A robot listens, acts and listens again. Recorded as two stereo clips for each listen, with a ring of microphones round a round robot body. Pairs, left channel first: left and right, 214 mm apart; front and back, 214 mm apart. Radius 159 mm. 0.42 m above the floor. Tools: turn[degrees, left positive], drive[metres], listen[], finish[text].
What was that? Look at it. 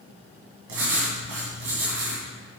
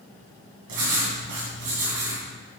Thought: The writing: 135° right.
Action: turn[-135]
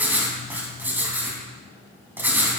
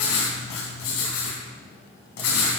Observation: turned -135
Thought: The writing is now 10° right.
Action: turn[-10]
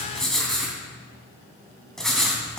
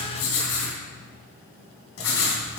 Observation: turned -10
Action: finish[Found it: writing, straight ahead, 2 to 4 m away.]